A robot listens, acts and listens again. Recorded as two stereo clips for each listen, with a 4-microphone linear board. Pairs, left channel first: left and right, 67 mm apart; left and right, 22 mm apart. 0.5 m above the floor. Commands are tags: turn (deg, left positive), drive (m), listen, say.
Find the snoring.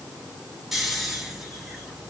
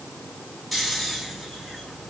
<turn deg="-30"/>
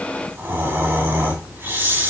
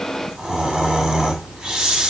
<turn deg="-150"/>
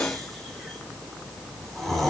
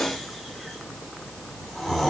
<say>Found it: snoring, straight ahead.</say>